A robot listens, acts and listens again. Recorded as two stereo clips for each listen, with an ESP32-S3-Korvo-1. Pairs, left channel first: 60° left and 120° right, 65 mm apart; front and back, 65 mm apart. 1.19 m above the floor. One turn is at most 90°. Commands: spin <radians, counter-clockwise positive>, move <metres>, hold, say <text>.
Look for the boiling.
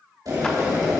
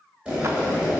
spin -1.57
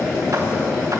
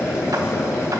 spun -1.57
spin -0.79
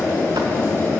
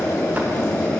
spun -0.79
say Facing the boiling.